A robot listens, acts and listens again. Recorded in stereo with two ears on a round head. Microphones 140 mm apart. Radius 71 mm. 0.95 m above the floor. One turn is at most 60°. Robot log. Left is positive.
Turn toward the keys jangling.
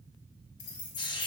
cmd yaw +60
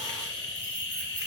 note: Nothing new. It was at 30° left.
cmd yaw +30
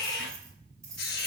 note: The keys jangling is now 20° right.
cmd yaw -20
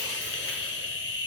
cmd idle
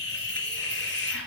cmd idle
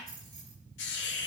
end: Facing the keys jangling, over 4 m away.